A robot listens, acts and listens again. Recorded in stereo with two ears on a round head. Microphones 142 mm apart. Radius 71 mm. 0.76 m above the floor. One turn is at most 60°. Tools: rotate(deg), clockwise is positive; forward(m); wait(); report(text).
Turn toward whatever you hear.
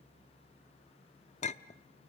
rotate(-45)
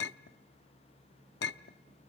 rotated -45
rotate(-60)
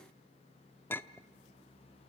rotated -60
rotate(-15)
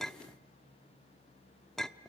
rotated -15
report("Found it: a clink, straight ahead.")